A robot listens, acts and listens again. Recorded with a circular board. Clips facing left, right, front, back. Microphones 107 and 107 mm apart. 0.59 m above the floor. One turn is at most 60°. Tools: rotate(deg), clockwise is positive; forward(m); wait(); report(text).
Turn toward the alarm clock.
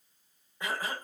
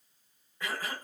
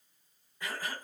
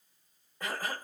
wait()
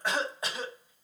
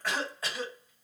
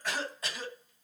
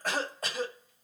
wait()
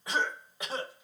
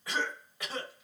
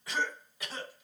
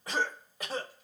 report("I can't make out an alarm clock to turn to.")